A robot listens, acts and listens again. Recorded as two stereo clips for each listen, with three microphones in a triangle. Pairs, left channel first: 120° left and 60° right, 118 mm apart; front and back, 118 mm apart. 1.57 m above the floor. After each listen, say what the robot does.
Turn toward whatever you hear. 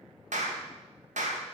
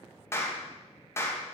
Turn 70° right.
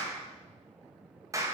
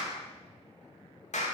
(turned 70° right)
Found it: a clap, straight ahead, 2 to 4 m away.